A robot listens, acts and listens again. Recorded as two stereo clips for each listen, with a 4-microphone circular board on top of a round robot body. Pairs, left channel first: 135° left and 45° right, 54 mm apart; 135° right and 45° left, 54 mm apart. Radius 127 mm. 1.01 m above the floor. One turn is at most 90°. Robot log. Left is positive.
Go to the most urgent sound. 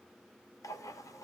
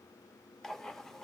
cmd idle
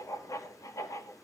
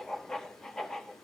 cmd idle
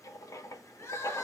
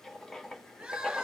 note: The crying: 110° left.
cmd yaw +90
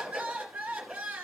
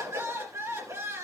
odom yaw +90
note: The crying is now 15° left.
cmd yaw +15
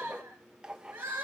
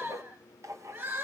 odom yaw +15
cmd fwd 1.0
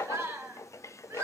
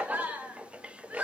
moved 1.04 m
note: The crying is now 10° right.
cmd yaw -10
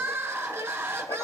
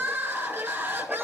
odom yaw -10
cmd fwd 1.0
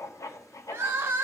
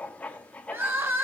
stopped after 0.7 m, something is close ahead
end: I am next to the crying.